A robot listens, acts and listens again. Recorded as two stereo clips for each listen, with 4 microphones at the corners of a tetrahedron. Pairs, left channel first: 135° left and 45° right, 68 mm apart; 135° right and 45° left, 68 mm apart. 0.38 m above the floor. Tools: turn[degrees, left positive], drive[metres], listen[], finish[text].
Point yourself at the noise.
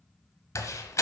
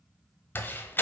Thought: The door slam: 170° left.
Action: turn[170]
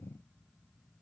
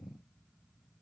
Action: finish[I heard a door slam from this way, but can't make it out now.]